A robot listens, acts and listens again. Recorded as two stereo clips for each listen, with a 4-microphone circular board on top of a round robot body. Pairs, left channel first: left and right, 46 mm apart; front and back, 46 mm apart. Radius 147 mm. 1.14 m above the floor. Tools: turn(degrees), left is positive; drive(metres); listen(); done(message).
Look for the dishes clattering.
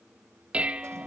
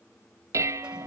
turn(degrees=-160)
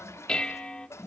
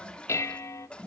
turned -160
turn(degrees=20)
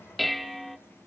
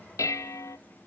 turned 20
done("Found it: dishes clattering, straight ahead.")